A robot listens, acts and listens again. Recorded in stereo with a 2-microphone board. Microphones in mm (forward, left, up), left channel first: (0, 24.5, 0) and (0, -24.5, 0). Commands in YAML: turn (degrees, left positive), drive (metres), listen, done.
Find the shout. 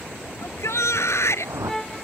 turn: 70
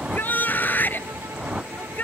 turn: 40
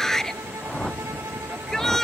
turn: 10
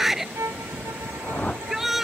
done: "Found it: a shout, straight ahead."